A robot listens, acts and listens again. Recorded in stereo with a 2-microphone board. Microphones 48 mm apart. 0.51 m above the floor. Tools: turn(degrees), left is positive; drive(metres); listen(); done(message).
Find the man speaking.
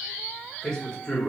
turn(degrees=25)
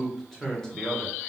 turn(degrees=20)
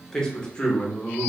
turn(degrees=35)
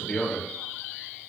turn(degrees=25)
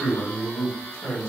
turn(degrees=25)
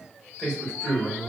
done("Facing the man speaking, 1 to 2 m away.")